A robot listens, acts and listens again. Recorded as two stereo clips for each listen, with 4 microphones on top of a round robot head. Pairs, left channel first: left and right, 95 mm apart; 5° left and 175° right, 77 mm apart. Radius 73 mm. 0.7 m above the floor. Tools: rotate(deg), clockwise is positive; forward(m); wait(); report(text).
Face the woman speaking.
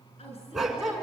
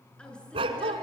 rotate(-80)
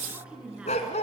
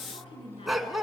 rotate(10)
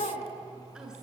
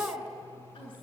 wait()
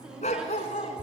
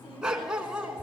rotate(10)
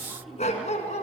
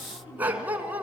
report("Facing the woman speaking, over 4 m away.")